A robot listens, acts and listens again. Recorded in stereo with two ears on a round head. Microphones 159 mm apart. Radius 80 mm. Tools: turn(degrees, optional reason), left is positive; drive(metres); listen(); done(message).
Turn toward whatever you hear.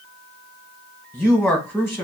turn(degrees=30)
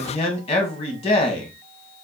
turn(degrees=135, reason="So it is at 135° left.")
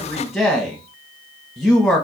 done("Facing the man speaking, 1 to 2 m away.")